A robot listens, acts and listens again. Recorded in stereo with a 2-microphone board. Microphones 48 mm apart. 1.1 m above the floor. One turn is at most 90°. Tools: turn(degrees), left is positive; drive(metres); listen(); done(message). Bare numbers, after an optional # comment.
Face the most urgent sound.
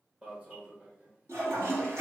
# The alarm: about 25° right or 155° right.
turn(-25)
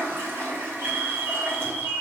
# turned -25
# So it is at 125° right.
turn(-90)
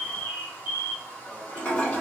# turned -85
# The alarm is now 40° right.
turn(-40)
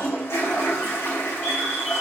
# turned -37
listen()
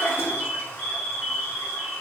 done("Facing the alarm, 1 to 2 m away.")